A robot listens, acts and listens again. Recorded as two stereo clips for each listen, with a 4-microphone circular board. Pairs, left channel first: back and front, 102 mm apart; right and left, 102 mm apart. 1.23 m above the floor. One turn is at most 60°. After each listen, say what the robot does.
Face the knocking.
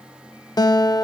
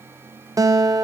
Keep listening.
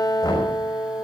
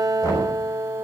Turn 60° right.
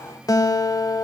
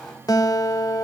Turn 60° right.
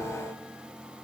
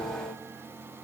Turn 20° right.
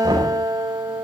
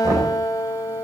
Turn 35° left.
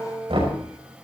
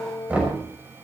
Turn 15° left.
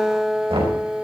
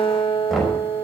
Facing the knocking, over 4 m away.